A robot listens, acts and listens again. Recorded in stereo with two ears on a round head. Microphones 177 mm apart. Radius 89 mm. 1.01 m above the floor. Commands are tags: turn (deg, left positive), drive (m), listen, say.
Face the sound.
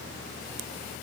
<listen/>
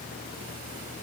<listen/>
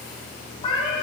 <turn deg="25"/>
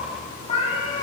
<turn deg="25"/>
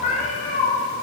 <turn deg="35"/>
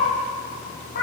<turn deg="130"/>
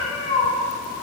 <turn deg="30"/>
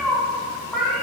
<say>Facing the cat meowing.</say>